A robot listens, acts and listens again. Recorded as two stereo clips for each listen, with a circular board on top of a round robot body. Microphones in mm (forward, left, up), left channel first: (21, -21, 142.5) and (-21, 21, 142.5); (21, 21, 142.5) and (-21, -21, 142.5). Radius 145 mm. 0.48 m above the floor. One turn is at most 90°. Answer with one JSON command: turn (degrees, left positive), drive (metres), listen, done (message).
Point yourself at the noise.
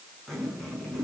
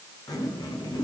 {"turn": 40}
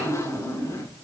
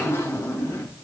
{"done": "Found it: a zipper, straight ahead, over 4 m away."}